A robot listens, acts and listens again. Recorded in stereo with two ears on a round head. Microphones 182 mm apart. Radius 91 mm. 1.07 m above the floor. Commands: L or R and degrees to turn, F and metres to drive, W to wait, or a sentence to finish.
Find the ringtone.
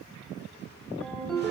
L30
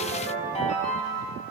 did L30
L145
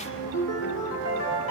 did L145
L65
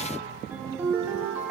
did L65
R10
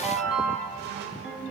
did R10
Found it: a ringtone, straight ahead.